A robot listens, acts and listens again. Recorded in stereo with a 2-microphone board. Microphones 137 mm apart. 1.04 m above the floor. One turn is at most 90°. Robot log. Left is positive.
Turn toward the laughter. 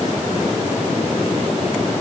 cmd idle
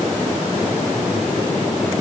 cmd idle
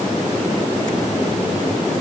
end: I can't make out laughter to turn to.